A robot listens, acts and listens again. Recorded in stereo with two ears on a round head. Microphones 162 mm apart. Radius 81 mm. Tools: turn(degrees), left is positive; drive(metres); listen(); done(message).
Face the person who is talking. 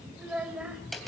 turn(degrees=-30)
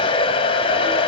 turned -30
listen()
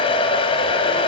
listen()
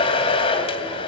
done("I heard a child speaking, but can't make it out now. It was about 25° left or 145° right.")